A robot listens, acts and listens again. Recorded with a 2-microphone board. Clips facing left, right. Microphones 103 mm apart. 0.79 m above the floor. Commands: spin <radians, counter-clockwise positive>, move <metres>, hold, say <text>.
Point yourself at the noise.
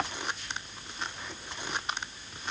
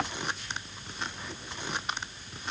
hold
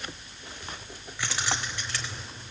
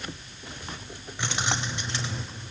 spin -0.35
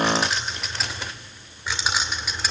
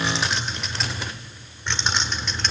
spin 0.17
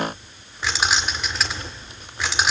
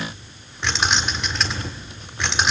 say Facing the keys jangling.